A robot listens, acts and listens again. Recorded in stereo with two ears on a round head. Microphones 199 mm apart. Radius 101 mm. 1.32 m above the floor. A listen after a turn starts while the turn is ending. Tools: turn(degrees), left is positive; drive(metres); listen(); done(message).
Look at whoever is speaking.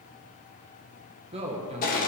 turn(degrees=-25)
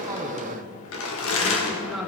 done("Found it: a man speaking, straight ahead, 1 to 2 m away.")